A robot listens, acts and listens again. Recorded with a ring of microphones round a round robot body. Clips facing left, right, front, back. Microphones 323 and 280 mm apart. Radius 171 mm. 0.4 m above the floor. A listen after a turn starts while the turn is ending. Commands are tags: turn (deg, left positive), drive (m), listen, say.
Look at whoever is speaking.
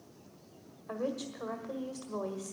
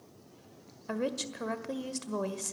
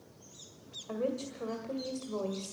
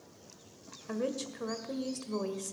<turn deg="-120"/>
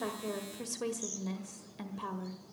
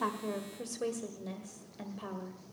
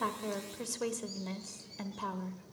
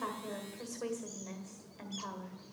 <turn deg="20"/>
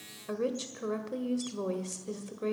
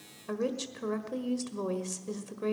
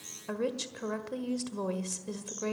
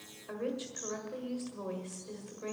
<say>Facing the woman speaking, 1 to 2 m away.</say>